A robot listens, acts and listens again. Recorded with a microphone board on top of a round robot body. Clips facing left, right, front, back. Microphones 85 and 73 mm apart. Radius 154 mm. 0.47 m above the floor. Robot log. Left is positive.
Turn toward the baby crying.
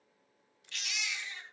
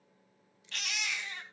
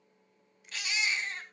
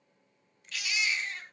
note: The baby crying: 50° right.
cmd yaw -50
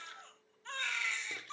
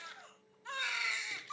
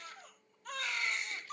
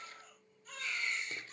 note: The baby crying is now 10° right.
cmd yaw -10
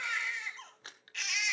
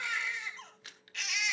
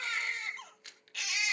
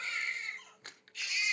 end: Found it: a baby crying, straight ahead, 2 to 4 m away.